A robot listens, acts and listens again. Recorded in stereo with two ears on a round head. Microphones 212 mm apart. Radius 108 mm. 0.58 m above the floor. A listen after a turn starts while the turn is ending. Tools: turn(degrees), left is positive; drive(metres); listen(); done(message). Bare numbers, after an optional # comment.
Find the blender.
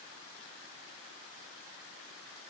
listen()
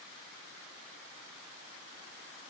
listen()
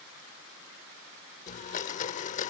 # The blender: about 30° left or 150° left.
turn(30)
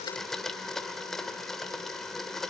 done("Found it: a blender, straight ahead, under 1 m away.")